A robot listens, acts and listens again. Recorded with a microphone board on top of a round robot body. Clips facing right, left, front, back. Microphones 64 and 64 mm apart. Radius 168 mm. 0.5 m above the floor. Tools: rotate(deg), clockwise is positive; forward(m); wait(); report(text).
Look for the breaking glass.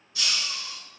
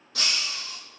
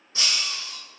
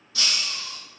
rotate(-65)
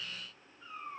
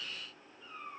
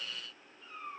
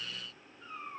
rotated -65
report("I heard breaking glass from this way, but can't make it out now.")